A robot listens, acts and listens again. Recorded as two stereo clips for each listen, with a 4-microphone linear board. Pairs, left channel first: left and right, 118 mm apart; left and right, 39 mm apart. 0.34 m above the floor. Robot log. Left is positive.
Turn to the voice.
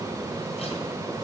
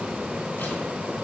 cmd idle
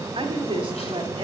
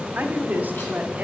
note: The woman speaking: about 45° right or 135° right.
cmd yaw -45
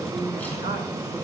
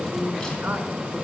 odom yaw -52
note: So it is at 70° right.
cmd yaw -70
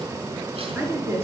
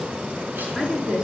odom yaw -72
note: The woman speaking is now 20° right.
cmd yaw -20
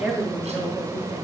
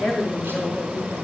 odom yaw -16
end: Facing the woman speaking.